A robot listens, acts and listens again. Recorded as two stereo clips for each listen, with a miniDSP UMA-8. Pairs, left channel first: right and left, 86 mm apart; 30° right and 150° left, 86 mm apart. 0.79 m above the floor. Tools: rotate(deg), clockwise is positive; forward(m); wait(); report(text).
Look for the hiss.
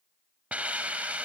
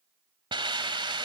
rotate(-165)
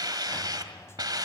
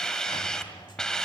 rotate(-55)
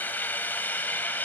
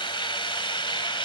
rotate(20)
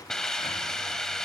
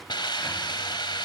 report("Found it: a hiss, straight ahead, 1 to 2 m away.")